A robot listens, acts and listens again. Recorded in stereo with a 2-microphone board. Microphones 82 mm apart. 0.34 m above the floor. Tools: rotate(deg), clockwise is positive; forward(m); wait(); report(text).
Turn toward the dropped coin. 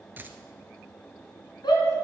rotate(25)
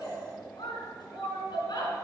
wait()
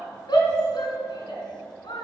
report("I heard a dropped coin, but can't make it out now. It was about straight ahead or 130° right.")